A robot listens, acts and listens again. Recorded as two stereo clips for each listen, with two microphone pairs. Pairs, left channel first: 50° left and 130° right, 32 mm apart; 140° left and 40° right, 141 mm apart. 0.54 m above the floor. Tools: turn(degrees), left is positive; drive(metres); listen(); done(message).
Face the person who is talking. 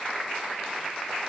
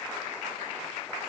listen()
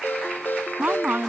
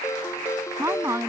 turn(degrees=-110)
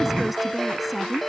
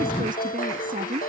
turn(degrees=-35)
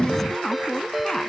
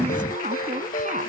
turn(degrees=-20)
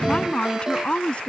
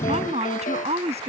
done("Facing the woman speaking.")